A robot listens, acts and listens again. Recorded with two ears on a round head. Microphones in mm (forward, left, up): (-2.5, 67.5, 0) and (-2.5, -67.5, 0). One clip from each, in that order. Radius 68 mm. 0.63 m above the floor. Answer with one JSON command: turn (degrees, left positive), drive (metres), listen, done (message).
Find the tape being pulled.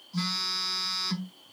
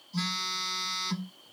{"listen": true}
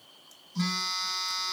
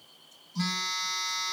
{"listen": true}
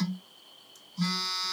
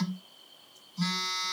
{"done": "I can't make out tape being pulled to turn to."}